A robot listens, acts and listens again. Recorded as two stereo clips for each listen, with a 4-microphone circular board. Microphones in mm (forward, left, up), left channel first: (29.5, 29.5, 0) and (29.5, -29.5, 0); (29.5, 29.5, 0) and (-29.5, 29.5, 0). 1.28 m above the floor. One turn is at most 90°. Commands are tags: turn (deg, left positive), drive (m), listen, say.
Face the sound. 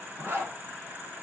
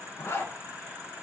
<turn deg="-40"/>
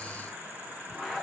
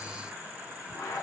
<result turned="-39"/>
<say>Facing the zipper, under 1 m away.</say>